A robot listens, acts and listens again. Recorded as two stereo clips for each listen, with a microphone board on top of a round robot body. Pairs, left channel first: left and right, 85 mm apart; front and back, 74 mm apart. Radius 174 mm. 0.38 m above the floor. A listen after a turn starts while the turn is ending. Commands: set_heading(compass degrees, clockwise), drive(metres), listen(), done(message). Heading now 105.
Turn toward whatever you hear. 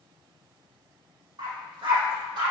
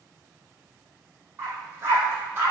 set_heading(225)
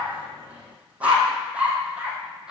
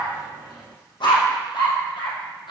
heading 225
set_heading(235)
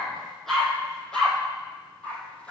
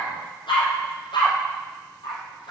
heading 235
set_heading(225)
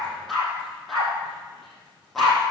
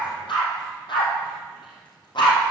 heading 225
done("Facing the dog barking.")